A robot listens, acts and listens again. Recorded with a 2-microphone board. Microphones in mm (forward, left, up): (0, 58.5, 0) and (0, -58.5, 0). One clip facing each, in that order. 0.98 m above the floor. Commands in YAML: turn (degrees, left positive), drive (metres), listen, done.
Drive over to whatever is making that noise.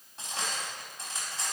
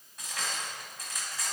turn: 30
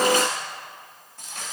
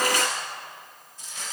turn: 120
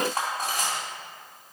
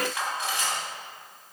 turn: 40
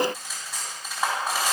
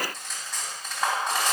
drive: 1.0
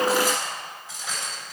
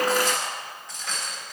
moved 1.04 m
drive: 1.0
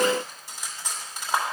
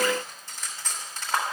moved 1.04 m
turn: 10
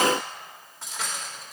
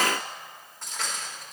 drive: 1.0
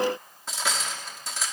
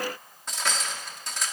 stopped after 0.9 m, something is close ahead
done: "Arrived at the cutlery clinking, straight ahead."